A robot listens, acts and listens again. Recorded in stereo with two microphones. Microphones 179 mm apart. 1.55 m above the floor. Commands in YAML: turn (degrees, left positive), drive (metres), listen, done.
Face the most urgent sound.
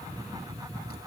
listen: true
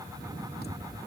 listen: true
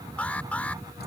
turn: 30
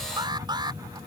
turn: -25
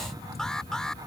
done: "Facing the alarm."